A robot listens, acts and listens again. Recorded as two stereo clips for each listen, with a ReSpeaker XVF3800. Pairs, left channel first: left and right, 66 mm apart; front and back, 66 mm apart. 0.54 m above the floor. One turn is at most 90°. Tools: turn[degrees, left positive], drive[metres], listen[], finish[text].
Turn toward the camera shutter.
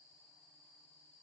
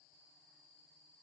Action: listen[]
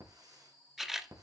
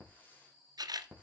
Thought: The camera shutter: 175° right.
Action: turn[-90]
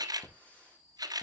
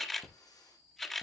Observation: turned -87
Thought: The camera shutter is now 85° right.
Action: turn[-85]
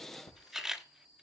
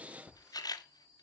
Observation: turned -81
Action: finish[Found it: a camera shutter, straight ahead, 1 to 2 m away.]